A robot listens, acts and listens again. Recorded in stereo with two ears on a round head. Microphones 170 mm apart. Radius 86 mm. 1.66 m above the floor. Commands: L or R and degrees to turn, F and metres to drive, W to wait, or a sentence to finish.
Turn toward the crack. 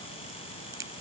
R15
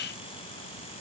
W
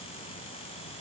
I heard a crack, but can't make it out now. It was about straight ahead or 150° right.